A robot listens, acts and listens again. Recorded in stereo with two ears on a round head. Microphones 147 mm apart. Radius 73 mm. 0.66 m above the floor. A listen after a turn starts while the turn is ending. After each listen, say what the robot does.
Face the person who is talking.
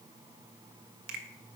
Keep listening.
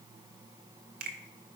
Keep listening.
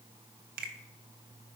I can't make out anyone speaking to turn to.